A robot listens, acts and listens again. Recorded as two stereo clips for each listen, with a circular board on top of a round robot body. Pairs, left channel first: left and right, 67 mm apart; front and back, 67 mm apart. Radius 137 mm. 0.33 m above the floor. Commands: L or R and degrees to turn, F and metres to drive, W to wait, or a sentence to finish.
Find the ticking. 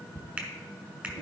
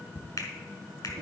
R75
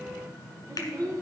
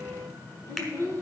W
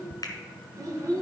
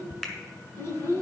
L35
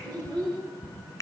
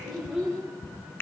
Facing the ticking, 1 to 2 m away.